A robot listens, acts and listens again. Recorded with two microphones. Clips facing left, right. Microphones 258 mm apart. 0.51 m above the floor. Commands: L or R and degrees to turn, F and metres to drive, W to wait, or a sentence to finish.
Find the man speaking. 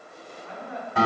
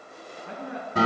R75
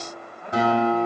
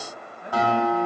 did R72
R20
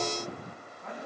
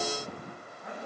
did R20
Facing the man speaking.